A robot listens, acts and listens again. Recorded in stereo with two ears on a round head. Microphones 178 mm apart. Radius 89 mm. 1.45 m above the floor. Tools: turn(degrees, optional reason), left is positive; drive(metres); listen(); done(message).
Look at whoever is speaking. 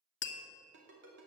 listen()
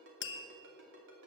listen()
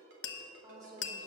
turn(degrees=-20, reason="The woman speaking: about 20° right or 160° right.")
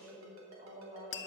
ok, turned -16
turn(degrees=-35, reason="The woman speaking: about 35° right or 145° right.")
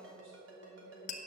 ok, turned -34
turn(degrees=-110, reason="So it is at 110° right.")
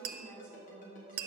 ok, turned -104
done("Found it: a woman speaking, straight ahead.")